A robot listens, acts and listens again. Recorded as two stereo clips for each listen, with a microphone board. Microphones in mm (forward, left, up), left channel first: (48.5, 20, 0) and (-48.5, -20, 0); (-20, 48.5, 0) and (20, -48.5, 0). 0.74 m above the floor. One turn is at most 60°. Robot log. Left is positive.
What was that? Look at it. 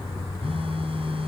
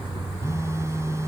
note: The phone buzzing: 130° right.
cmd yaw -60
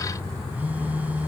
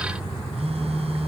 note: The phone buzzing is now 80° right.
cmd yaw -60
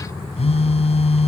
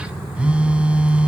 note: The phone buzzing is now 10° left.
cmd yaw +10
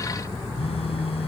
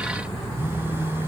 end: Facing the phone buzzing.